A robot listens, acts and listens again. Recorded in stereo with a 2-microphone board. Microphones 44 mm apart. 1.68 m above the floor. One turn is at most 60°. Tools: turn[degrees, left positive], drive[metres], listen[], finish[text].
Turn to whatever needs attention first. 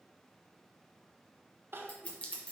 Thought: The crying: about 55° right or 125° right.
Action: turn[-55]
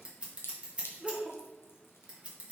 Thought: So it is at 10° right.
Action: turn[-10]
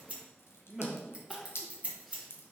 Action: finish[Found it: crying, straight ahead, 1 to 2 m away.]